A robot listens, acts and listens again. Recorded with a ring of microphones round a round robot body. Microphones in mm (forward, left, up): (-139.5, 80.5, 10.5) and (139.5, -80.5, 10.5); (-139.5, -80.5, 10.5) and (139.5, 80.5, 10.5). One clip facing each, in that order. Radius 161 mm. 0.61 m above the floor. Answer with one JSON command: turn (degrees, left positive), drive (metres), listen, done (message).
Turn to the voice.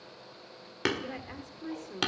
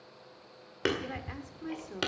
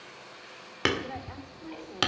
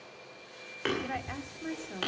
{"turn": 60}
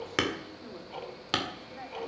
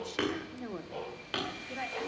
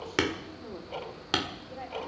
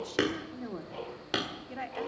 {"turn": -10}
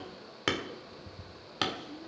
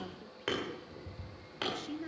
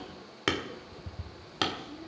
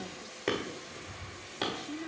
{"done": "Found it: a woman speaking, straight ahead."}